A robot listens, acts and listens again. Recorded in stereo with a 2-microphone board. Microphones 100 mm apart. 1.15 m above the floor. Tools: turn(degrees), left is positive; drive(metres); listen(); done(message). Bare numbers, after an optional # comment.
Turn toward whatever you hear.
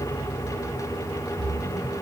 turn(30)
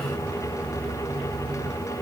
listen()
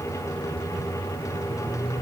done("I heard a splash, but can't make it out now. It was about 25° right or 145° left.")